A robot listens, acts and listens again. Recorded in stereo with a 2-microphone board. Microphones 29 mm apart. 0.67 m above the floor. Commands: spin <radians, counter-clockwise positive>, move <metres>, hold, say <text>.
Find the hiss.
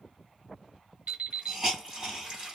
spin -0.52
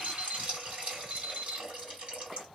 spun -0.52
spin -2.09
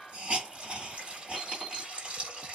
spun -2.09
spin -0.79
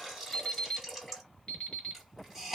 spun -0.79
say Facing the hiss, 2 to 4 m away.